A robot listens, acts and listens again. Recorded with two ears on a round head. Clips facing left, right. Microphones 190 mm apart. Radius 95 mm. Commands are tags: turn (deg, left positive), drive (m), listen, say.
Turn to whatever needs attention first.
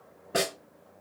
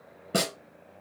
<listen/>
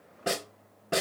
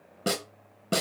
<listen/>
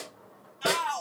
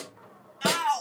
<turn deg="-90"/>
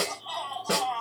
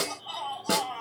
<say>Facing the shout.</say>